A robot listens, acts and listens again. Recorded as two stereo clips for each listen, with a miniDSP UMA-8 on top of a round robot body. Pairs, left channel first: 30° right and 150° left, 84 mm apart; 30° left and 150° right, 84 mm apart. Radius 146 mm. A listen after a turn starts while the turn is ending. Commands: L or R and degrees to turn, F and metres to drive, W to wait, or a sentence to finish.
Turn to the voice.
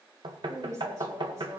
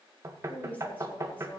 L100
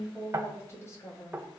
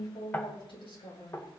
L25
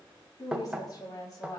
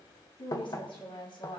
L15
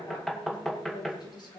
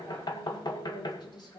Found it: a woman speaking, straight ahead, over 4 m away.